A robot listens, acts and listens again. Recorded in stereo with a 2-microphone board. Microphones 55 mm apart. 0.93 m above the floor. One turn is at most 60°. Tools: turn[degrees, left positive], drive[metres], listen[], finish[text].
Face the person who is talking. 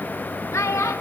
Thought: The child speaking: about 65° left or 115° left.
Action: turn[60]
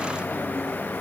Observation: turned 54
Action: listen[]
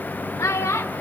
Thought: So it is at 60° left.
Action: turn[60]
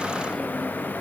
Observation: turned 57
Action: listen[]
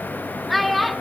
Action: finish[Found it: a child speaking, straight ahead, under 1 m away.]